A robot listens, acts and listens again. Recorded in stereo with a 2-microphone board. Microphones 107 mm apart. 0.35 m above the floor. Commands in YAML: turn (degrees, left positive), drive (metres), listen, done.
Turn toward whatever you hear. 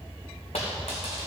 turn: 90
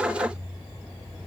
done: "I heard a dropped coin from this way, but can't make it out now."